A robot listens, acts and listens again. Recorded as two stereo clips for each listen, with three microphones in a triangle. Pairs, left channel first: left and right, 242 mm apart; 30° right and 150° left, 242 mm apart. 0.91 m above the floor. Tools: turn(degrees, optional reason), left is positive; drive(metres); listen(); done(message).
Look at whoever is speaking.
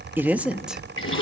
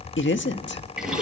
done("Facing the man speaking.")